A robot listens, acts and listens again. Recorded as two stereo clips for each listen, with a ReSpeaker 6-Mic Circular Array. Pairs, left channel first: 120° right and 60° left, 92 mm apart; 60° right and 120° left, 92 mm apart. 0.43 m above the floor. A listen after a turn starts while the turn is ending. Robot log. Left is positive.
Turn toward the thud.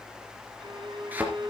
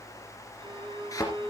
note: The thud: 10° right.
cmd yaw -10
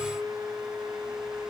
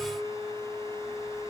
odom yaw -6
end: Facing where the thud came from. I can't hear it now.